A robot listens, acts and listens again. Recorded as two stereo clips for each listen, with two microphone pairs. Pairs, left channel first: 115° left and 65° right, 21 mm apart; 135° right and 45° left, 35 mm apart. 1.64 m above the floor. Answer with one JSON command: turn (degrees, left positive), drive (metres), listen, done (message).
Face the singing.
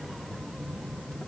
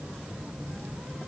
{"listen": true}
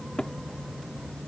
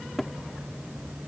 {"listen": true}
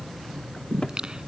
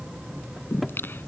{"turn": -115}
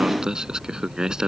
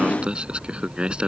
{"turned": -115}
{"turn": -15}
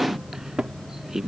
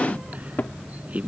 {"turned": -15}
{"done": "Found it: singing, straight ahead."}